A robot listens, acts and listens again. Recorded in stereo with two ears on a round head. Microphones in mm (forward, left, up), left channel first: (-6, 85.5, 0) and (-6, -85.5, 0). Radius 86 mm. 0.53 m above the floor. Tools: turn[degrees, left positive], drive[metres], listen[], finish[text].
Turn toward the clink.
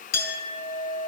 Thought: The clink: about 55° left or 125° left.
Action: turn[55]
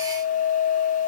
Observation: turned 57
Thought: So it is at 70° left.
Action: turn[70]
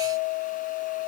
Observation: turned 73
Action: finish[Facing the clink.]